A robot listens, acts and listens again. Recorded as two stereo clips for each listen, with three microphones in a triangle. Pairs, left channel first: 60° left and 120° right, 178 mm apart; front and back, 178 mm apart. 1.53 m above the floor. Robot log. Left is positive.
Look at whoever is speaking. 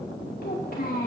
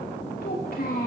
note: The child speaking: 30° left.
cmd yaw +30
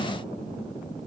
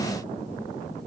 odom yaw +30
cmd idle
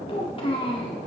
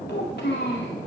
end: Facing the child speaking.